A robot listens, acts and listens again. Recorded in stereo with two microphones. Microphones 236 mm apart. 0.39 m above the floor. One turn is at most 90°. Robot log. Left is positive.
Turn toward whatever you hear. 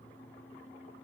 cmd idle
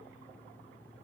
cmd idle
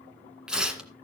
cmd yaw -30
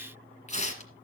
note: So it is at 30° left.
cmd yaw +30
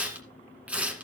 end: Found it: tearing paper, straight ahead, 1 to 2 m away.